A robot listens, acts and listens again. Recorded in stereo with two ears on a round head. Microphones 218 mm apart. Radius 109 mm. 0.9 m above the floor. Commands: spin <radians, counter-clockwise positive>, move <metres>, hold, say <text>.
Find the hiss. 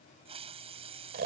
spin -0.44
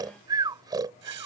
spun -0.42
hold
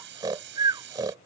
spin -2.27
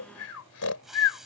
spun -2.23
say Found it: a hiss, straight ahead.